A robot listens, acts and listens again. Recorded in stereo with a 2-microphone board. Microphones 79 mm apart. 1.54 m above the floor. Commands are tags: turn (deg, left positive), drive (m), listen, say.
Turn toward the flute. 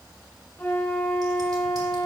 <turn deg="25"/>
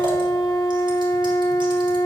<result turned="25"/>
<turn deg="130"/>
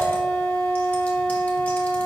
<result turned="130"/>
<turn deg="15"/>
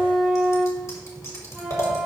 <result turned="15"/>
<say>Facing the flute, 1 to 2 m away.</say>